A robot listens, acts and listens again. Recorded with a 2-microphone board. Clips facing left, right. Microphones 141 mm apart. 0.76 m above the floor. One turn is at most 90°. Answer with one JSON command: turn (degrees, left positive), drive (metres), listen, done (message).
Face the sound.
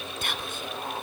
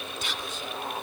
{"turn": 55}
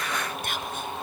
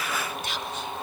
{"turn": 60}
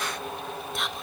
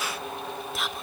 {"done": "Found it: whispering, straight ahead, 1 to 2 m away."}